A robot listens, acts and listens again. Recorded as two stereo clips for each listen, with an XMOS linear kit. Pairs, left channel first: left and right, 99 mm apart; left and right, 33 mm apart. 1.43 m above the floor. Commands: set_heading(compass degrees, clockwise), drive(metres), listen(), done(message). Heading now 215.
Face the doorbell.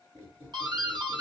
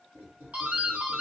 set_heading(265)
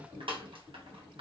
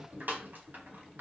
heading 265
set_heading(340)
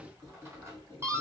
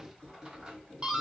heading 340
set_heading(10)
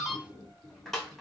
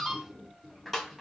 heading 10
done("Facing the doorbell.")